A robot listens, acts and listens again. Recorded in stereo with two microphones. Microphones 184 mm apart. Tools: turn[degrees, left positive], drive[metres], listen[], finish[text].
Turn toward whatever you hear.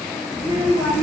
Thought: The child speaking: about 20° right or 160° right.
Action: turn[-20]
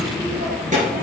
Thought: So it is at 135° right.
Action: turn[-135]
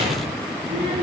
Thought: The child speaking is now 25° right.
Action: turn[-25]
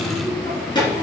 Thought: The child speaking is now 25° left.
Action: turn[25]
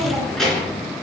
Action: finish[Facing the child speaking.]